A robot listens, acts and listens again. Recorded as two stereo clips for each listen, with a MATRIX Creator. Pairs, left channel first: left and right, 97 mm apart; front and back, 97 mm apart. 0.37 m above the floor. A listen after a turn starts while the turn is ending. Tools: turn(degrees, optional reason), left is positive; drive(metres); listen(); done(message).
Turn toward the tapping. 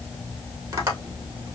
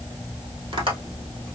turn(degrees=-145, reason="The tapping: 145° right.")
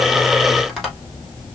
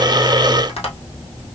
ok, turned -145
done("Facing the tapping, 2 to 4 m away.")